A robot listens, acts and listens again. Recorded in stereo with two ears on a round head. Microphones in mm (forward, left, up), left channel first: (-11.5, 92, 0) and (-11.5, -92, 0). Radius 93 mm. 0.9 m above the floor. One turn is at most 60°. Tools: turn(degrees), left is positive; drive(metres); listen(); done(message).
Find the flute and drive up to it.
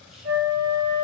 turn(degrees=-60)
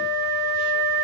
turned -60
turn(degrees=-40)
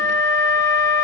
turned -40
drive(metres=1.0)
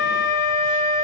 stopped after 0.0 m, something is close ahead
done("Blocked. The flute is further on, straight ahead.")